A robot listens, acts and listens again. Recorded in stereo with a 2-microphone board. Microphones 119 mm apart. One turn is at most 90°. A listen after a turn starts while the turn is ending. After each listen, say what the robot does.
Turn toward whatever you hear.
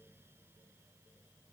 Keep listening.
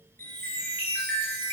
Turn 20° left.
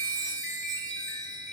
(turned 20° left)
Found it: a chime, straight ahead.